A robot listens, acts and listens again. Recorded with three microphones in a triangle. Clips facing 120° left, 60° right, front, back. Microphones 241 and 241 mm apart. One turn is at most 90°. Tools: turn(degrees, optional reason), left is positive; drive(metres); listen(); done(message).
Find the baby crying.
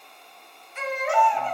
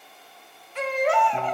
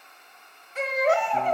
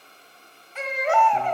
turn(degrees=-50, reason="The baby crying: 50° right.")
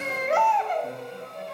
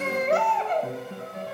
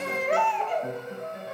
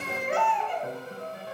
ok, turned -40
turn(degrees=-10, reason="The baby crying is now 10° right.")
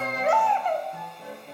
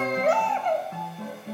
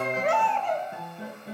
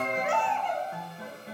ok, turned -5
done("Facing the baby crying, 1 to 2 m away.")